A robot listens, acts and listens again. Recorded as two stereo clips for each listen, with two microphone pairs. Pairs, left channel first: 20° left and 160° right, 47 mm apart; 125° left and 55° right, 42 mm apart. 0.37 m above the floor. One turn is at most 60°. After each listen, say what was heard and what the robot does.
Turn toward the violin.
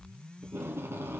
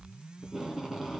Keep listening.
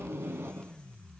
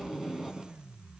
Keep listening.
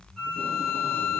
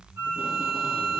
The violin: 65° right. Turn 60° right.
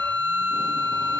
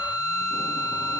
The violin is now 10° right. Turn 10° right.
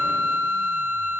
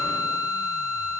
Found it: a violin, straight ahead, over 4 m away.